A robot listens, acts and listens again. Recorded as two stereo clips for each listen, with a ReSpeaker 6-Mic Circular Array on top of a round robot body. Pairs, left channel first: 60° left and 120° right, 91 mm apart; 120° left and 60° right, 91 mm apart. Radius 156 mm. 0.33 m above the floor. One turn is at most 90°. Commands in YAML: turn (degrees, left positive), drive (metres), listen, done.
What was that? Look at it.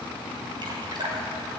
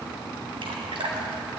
turn: -85
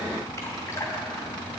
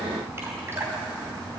done: "Found it: dripping, straight ahead, over 4 m away."